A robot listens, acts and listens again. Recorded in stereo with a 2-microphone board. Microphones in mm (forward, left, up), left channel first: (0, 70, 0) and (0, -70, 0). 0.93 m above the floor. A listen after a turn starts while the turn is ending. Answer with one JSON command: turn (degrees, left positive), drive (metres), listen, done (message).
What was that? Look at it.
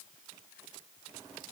{"listen": true}
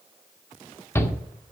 {"turn": 15}
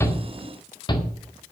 {"turn": 150}
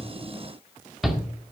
{"done": "Facing the shout."}